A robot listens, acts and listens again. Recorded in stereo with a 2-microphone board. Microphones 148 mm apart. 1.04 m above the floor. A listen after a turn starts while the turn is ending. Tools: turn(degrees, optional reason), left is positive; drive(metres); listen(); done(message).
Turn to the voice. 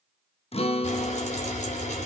listen()
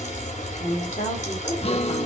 turn(degrees=65, reason="The woman speaking: about 65° left or 115° left.")
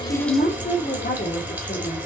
turn(degrees=75, reason="So it is at 75° left.")
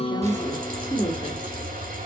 turn(degrees=30, reason="The woman speaking is now 30° left.")
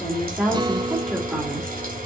listen()
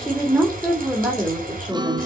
turn(degrees=-10, reason="The woman speaking is now 10° right.")
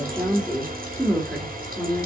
done("Found it: a woman speaking, straight ahead.")